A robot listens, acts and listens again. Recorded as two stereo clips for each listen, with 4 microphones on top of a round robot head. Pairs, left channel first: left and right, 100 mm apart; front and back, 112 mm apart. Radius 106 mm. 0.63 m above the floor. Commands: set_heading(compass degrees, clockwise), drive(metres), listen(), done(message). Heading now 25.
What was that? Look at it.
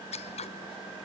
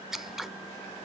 set_heading(290)
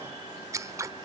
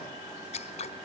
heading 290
set_heading(320)
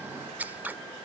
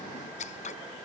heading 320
set_heading(335)
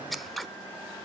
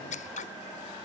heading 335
done("Facing the scissors.")